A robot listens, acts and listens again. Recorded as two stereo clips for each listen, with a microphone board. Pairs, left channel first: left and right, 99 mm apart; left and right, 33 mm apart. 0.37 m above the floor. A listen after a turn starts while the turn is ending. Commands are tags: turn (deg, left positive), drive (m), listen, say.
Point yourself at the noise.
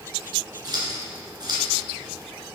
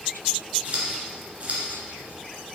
<turn deg="-45"/>
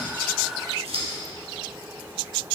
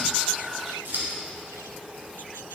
<turn deg="-85"/>
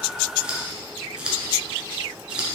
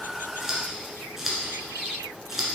<turn deg="-10"/>
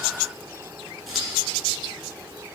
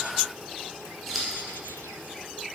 <listen/>
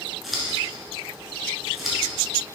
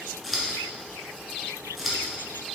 <say>Facing the scissors, 1 to 2 m away.</say>